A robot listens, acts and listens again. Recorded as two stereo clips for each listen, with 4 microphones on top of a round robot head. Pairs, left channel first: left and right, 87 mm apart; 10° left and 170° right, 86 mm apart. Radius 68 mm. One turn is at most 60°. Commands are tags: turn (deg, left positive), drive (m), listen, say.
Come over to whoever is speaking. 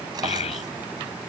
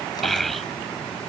<turn deg="60"/>
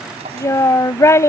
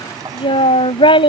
<turn deg="30"/>
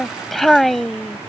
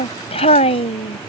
<drive m="1.0"/>
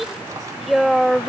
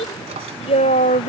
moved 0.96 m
<drive m="1.0"/>
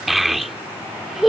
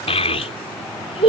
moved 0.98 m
<drive m="1.0"/>
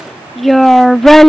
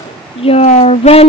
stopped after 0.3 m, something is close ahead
<say>I am next to the child speaking.</say>